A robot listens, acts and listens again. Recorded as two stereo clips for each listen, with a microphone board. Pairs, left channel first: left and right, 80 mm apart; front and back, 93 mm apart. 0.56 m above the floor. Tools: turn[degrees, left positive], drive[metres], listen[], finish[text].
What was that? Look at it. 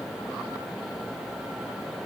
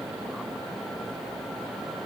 Action: listen[]
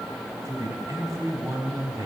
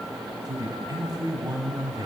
Thought: The man speaking: 135° right.
Action: turn[-135]
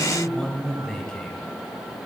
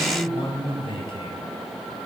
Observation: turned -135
Thought: The man speaking is now 10° left.
Action: turn[10]
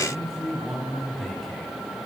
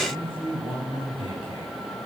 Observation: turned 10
Action: finish[Found it: a man speaking, straight ahead.]